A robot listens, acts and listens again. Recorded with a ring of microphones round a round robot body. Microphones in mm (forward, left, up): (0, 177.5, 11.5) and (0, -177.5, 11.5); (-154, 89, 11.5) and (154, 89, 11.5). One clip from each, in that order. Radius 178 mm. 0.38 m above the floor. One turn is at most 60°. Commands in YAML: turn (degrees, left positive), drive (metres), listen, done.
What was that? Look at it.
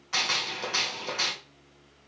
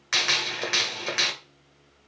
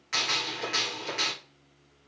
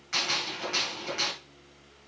turn: -60
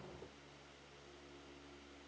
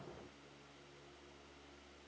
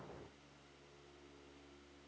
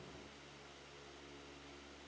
turn: -35
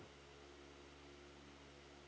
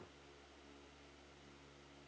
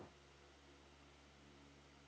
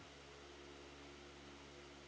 done: "Facing where the gunshot came from. I can't hear it now."